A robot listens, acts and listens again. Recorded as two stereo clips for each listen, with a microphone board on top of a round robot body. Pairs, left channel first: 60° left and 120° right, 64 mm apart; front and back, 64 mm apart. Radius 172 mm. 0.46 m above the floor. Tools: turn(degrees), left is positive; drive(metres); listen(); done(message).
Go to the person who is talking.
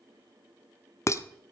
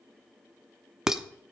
listen()
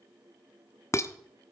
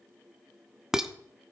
listen()
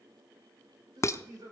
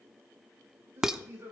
turn(degrees=-130)
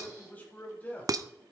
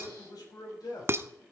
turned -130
drive(metres=1.0)
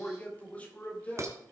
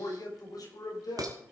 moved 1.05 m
drive(metres=1.0)
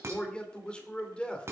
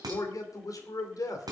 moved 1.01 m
turn(degrees=-10)
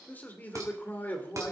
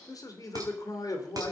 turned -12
drive(metres=1.0)
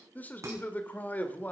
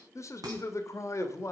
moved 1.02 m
drive(metres=1.0)
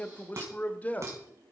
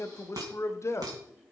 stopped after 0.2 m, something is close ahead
done("Arrived at the man speaking, straight ahead.")